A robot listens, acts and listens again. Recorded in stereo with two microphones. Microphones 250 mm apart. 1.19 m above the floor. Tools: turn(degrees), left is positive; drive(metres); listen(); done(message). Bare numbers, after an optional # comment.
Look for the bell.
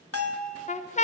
# The bell: about 65° left or 115° left.
turn(65)
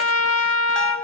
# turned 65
listen()
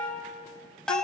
done("Facing the bell, under 1 m away.")